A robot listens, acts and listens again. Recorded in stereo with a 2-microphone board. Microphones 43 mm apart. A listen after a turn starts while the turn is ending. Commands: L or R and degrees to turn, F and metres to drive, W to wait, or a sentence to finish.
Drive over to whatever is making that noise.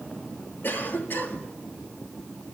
L50
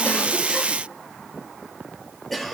F1.0
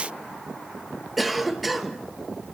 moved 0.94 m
F1.0
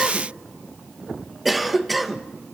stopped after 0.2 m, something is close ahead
Arrived at the cough, straight ahead.